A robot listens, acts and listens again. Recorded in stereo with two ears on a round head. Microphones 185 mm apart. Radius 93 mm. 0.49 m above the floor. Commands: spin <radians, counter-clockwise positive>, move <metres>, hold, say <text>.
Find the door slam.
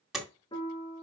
spin 0.52
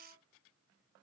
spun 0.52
hold
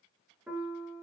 say I heard a door slam, but can't make it out now. It was about 30° right or 150° left.